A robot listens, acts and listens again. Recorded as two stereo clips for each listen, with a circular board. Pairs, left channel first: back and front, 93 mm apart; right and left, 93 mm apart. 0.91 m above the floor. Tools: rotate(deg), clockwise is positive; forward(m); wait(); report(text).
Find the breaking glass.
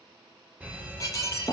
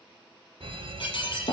rotate(125)
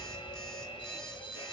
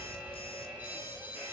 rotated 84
rotate(40)
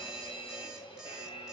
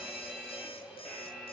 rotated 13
rotate(25)
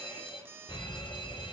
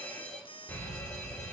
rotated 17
rotate(10)
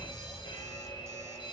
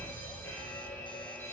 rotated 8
report("Facing where the breaking glass came from. I can't hear it now.")